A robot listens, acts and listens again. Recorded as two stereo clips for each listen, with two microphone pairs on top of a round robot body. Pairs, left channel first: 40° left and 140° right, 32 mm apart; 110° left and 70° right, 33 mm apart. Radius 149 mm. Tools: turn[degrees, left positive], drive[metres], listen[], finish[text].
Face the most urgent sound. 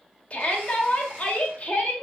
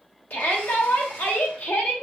Thought: The shout: 85° left.
Action: turn[85]
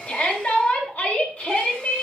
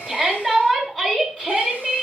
Thought: The shout is now 25° left.
Action: turn[25]
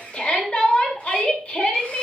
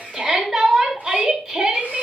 Action: finish[Facing the shout, 2 to 4 m away.]